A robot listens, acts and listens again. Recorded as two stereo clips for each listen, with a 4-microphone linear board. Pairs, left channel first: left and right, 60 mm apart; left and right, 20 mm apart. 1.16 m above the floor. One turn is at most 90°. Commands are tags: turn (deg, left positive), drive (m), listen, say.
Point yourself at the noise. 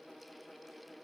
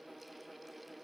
<listen/>
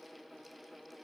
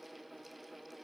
<listen/>
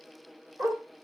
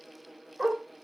<turn deg="-45"/>
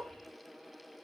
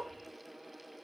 <listen/>
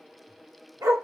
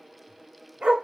<turn deg="-90"/>
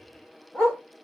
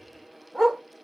<turn deg="20"/>
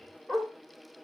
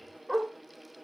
<say>Found it: a dog barking, straight ahead.</say>